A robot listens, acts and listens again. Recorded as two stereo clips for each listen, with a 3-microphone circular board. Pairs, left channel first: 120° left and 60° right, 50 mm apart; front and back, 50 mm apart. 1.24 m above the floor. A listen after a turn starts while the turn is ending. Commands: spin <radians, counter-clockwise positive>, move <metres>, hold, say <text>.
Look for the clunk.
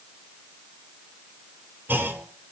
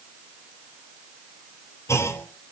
spin -0.26
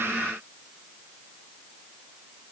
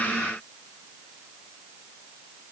say Facing where the clunk came from. I can't hear it now.